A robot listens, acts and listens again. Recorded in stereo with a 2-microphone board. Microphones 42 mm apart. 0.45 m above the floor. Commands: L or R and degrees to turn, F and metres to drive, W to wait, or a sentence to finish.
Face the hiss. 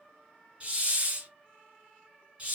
R30
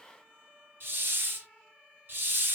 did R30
R120
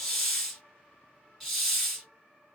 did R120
Found it: a hiss, straight ahead, 1 to 2 m away.